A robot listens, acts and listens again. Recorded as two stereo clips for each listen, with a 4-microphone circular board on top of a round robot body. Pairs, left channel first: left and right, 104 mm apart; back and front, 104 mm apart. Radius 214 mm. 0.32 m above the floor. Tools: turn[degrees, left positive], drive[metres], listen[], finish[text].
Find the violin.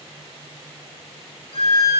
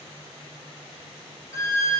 Thought: The violin: 120° left.
Action: turn[120]
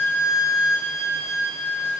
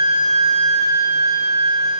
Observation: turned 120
Thought: The violin is now 20° left.
Action: turn[20]
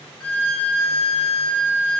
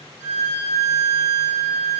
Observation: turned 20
Action: finish[Facing the violin.]